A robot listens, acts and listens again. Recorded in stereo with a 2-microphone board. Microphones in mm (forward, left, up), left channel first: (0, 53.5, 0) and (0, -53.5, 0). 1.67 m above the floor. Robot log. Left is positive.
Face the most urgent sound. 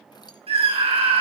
note: The scream: about 65° right or 115° right.
cmd yaw -65
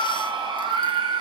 note: So it is at 50° right.
cmd yaw -50
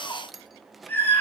note: The scream is now 20° left.
cmd yaw +20
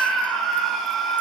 end: Found it: a scream, straight ahead, over 4 m away.